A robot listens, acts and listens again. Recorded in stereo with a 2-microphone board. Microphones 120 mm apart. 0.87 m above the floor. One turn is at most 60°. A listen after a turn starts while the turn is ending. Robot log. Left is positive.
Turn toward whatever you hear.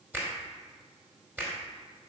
note: The finger snap: about 20° right or 160° right.
cmd yaw -20
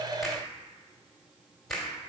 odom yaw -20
end: Facing the finger snap, 2 to 4 m away.